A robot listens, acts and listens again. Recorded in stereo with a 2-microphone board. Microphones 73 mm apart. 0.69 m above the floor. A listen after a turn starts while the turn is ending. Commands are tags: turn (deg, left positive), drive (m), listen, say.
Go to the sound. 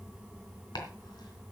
<turn deg="70"/>
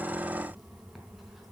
<listen/>
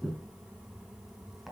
<drive m="1.0"/>
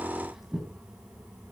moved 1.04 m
<drive m="1.0"/>
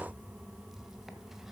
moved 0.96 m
<listen/>
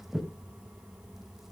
<drive m="1.0"/>
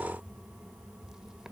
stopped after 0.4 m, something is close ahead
<listen/>
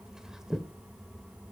<say>Arrived at the chopping, straight ahead.</say>